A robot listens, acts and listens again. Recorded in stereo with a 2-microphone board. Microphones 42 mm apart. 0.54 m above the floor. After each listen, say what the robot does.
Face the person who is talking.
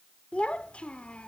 Turn 25° left.
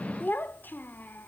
Turn 120° left.
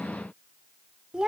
Turn 20° right.
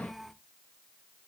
Facing the child speaking, under 1 m away.